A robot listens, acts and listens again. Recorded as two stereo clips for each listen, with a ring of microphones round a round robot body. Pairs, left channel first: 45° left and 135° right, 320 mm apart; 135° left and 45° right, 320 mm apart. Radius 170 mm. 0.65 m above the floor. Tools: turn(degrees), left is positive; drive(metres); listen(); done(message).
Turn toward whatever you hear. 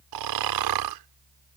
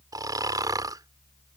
turn(degrees=-125)
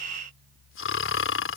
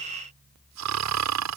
done("Facing the snoring.")